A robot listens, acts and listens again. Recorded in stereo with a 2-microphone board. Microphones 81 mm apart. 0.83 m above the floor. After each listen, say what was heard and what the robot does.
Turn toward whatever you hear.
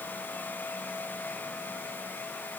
Keep listening.
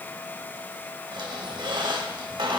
Turn 90° right.
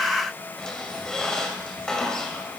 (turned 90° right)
Found it: a squeak, straight ahead, 2 to 4 m away.